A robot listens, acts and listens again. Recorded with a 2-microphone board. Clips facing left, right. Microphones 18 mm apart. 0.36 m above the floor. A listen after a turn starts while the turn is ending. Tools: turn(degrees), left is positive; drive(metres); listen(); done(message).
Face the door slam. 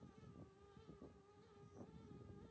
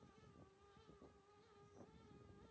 listen()
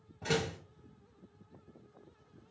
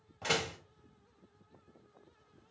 turn(degrees=-55)
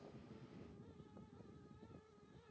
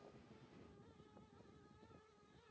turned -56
listen()
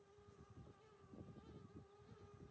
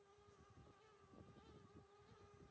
done("I heard a door slam, but can't make it out now. It was about straight ahead or 70° right.")